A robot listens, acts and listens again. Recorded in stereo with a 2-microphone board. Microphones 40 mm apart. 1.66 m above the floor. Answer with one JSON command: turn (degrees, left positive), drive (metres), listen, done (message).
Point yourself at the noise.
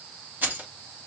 {"turn": -50}
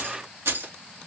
{"turn": -75}
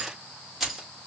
{"done": "Facing the keys jangling."}